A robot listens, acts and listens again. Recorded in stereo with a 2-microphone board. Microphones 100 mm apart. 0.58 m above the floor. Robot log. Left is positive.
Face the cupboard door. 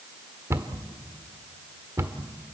note: The cupboard door: about 30° right or 150° right.
cmd yaw -30
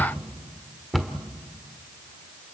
end: Facing the cupboard door.